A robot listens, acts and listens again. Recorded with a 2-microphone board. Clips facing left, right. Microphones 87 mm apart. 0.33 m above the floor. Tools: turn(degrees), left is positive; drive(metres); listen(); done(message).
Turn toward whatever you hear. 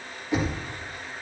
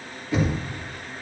turn(degrees=20)
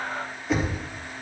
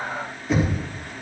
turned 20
done("Found it: knocking, straight ahead, over 4 m away.")